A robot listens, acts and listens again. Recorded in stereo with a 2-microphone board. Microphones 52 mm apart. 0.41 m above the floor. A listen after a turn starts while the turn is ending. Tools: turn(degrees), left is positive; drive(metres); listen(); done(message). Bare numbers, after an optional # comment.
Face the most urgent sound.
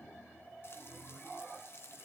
listen()
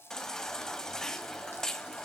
turn(30)
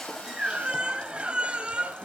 # So it is at 25° right.
turn(-25)
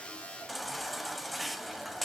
done("Facing the baby crying, 1 to 2 m away.")